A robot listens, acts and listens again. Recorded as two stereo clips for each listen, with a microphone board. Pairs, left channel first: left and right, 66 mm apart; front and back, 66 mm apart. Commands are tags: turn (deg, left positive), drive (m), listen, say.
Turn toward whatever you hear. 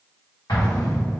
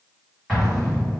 <turn deg="85"/>
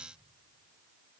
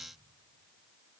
<say>I heard an explosion from this way, but can't make it out now.</say>